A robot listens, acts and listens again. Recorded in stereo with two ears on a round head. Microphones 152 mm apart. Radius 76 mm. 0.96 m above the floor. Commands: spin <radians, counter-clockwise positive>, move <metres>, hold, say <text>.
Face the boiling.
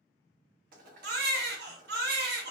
spin -0.96
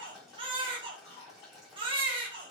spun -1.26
say Facing the boiling, 1 to 2 m away.